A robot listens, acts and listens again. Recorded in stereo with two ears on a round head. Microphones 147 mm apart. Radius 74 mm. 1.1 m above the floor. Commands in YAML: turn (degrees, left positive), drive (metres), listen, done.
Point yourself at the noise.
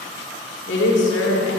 turn: 90
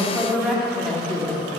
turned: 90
turn: 10
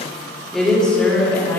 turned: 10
turn: 10
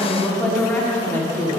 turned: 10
turn: 15
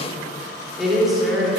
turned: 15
done: "Found it: a woman speaking, straight ahead."